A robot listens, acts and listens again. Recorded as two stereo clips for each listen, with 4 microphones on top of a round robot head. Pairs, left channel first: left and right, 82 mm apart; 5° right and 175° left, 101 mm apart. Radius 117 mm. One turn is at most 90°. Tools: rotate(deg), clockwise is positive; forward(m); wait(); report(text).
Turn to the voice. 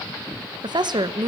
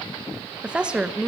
rotate(90)
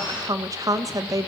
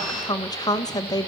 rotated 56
rotate(50)
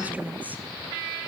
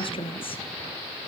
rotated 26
rotate(20)
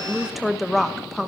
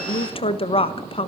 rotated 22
report("Facing the woman speaking.")